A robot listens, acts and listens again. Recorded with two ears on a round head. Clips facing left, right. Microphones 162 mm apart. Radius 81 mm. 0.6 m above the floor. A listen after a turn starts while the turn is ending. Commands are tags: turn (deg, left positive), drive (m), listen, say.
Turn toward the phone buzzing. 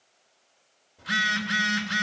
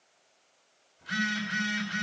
<turn deg="70"/>
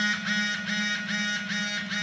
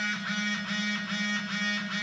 <turn deg="20"/>
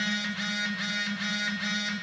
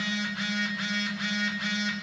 <say>Facing the phone buzzing, 2 to 4 m away.</say>